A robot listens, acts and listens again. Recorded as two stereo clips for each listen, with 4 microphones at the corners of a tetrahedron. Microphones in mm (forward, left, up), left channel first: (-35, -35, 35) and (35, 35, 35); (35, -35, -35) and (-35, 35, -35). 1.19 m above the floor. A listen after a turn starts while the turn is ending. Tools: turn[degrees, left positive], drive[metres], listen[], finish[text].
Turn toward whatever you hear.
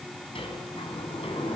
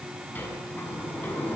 Thought: The sliding door: 115° right.
Action: turn[-115]
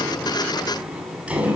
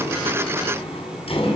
Thought: The sliding door is now 30° right.
Action: turn[-30]
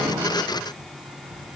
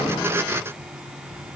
Action: listen[]
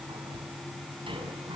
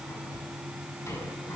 Action: listen[]
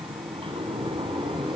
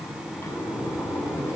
Thought: The sliding door is now 20° left.
Action: turn[20]
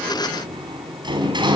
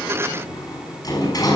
Action: finish[Facing the sliding door.]